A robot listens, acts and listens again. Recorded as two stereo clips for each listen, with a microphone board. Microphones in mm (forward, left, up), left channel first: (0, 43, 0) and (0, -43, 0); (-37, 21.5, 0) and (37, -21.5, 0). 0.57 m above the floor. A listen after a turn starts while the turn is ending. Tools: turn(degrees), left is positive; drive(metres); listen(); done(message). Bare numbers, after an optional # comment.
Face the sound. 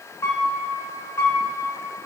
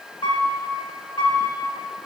# The piano: 145° left.
turn(145)
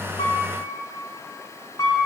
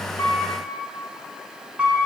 # The piano is now 45° left.
turn(45)
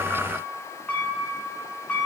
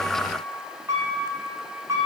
# The piano is now 20° left.
turn(20)
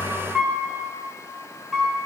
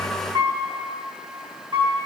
done("Found it: a piano, straight ahead.")